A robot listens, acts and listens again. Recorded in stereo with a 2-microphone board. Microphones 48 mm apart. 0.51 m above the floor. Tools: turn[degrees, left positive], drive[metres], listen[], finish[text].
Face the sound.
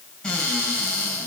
Thought: The cupboard door: about 25° left or 155° left.
Action: turn[25]
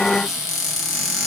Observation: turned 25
Action: finish[Found it: a cupboard door, straight ahead, over 4 m away.]